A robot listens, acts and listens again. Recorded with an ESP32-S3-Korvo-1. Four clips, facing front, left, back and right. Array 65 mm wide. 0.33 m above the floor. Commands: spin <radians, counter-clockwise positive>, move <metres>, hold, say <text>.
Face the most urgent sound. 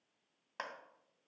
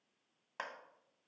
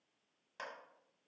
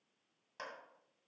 hold
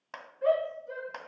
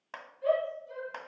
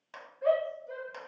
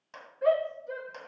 spin -1.31
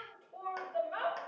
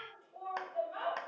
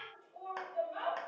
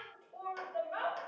spin -0.35
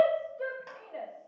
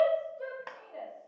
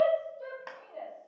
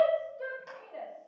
say Facing the shout.